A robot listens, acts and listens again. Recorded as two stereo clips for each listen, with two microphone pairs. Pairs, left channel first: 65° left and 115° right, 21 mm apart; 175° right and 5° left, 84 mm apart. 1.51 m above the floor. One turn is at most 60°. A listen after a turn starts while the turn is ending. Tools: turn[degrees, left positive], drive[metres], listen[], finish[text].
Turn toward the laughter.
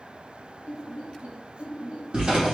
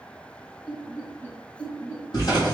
Thought: The laughter: 120° right.
Action: turn[-60]
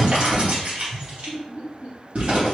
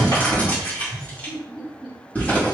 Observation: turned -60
Thought: The laughter is now 80° right.
Action: turn[-60]
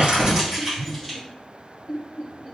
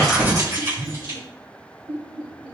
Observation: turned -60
Action: finish[Facing the laughter, over 4 m away.]